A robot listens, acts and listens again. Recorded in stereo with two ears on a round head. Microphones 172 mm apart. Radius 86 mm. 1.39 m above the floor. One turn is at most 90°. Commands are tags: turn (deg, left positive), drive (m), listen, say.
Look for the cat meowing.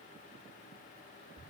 <listen/>
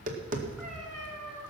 <turn deg="30"/>
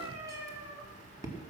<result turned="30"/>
<turn deg="-20"/>
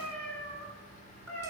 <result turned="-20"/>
<turn deg="10"/>
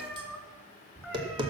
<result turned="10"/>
<say>Facing the cat meowing.</say>